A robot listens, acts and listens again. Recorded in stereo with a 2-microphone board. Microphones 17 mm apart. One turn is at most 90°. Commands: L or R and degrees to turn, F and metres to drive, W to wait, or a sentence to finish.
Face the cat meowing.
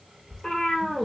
L75
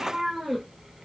R25
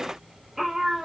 R25
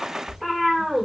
R25
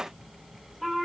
Found it: a cat meowing, straight ahead, 2 to 4 m away.